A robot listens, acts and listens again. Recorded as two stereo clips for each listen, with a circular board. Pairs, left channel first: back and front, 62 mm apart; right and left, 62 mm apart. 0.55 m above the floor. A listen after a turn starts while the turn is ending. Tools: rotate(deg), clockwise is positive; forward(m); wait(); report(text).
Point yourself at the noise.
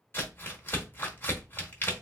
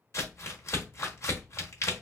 rotate(125)
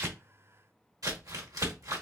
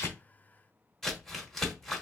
rotate(10)
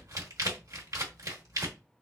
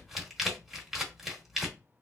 report("Found it: crumpling, straight ahead, 1 to 2 m away.")